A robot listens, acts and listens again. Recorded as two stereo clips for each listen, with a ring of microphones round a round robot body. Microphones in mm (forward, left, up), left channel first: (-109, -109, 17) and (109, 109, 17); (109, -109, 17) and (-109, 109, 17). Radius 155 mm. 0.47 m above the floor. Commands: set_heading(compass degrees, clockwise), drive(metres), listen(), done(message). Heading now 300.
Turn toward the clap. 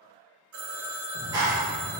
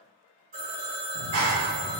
set_heading(175)
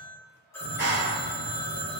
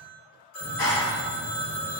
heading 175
done("Facing the clap, under 1 m away.")